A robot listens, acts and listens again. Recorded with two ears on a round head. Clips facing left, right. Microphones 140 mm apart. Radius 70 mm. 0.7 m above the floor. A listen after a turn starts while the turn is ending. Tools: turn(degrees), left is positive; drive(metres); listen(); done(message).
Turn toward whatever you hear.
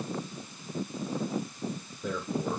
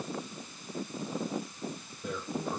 turn(degrees=65)
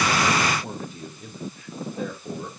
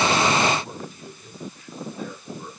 turn(degrees=60)
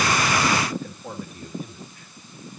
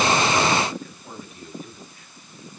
turn(degrees=35)
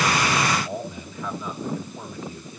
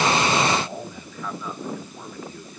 turn(degrees=15)
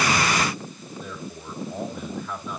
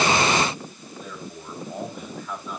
done("Facing the man speaking, 2 to 4 m away.")